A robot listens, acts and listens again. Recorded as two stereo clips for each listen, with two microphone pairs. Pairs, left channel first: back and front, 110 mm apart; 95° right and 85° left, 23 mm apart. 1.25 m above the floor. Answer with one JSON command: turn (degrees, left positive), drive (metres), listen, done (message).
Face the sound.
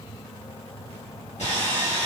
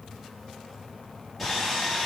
{"turn": -175}
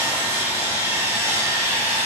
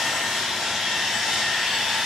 {"done": "Facing the sawing."}